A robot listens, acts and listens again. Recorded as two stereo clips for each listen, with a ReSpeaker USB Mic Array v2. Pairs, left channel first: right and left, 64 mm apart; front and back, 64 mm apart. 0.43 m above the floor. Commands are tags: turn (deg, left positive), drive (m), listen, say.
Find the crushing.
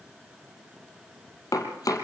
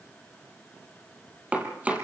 <listen/>
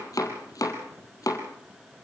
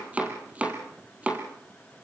<listen/>
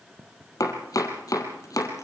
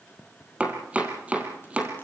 <say>I can't make out crushing, only chopping.</say>